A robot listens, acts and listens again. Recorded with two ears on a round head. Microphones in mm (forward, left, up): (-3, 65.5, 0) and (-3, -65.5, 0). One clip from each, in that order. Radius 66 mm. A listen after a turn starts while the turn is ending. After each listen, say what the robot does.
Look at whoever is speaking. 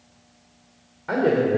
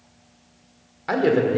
Turn 70° right.
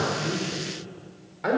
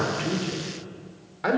Turn 20° right.
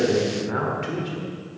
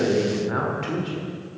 Facing the man speaking, 1 to 2 m away.